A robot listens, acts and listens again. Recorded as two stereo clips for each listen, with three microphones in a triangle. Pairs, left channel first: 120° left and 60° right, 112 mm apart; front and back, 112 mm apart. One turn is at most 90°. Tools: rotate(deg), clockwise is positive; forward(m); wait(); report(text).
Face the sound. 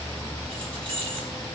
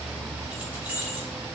rotate(90)
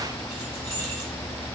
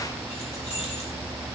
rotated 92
rotate(10)
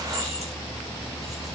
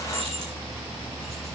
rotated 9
wait()
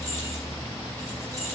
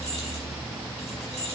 report("Facing the keys jangling.")